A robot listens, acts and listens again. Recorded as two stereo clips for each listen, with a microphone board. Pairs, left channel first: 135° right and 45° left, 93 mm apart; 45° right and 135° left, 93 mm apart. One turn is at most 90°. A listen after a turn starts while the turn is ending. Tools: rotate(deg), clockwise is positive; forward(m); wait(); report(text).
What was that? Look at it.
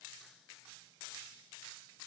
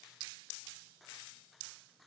wait()
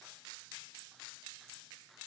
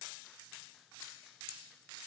wait()
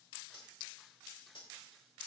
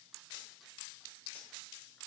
rotate(90)
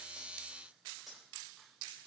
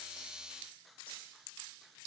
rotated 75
rotate(45)
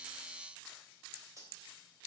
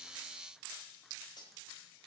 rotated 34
rotate(10)
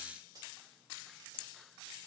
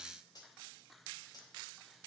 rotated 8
report("Found it: cutlery clinking, straight ahead, 2 to 4 m away.")